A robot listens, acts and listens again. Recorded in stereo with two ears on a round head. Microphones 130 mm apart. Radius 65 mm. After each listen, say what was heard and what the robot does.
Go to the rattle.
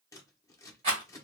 The rattle: about 50° right or 130° right. Turn 50° right.
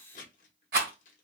So it is at 80° right. Turn 80° right.
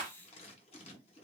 The rattle is now 25° right. Turn 25° right.
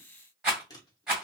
Drive 1.0 m forward.
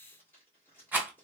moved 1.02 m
The rattle is now 10° right. Turn 10° right.
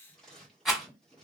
Drive 1.0 m forward.
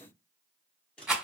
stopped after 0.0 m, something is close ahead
Arrived at the rattle, straight ahead.